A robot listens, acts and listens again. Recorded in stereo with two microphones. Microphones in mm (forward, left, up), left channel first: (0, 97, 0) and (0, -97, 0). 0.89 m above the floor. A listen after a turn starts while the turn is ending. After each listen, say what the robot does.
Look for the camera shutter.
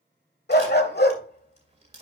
Turn 35° right.
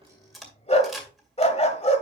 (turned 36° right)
Found it: a camera shutter, straight ahead.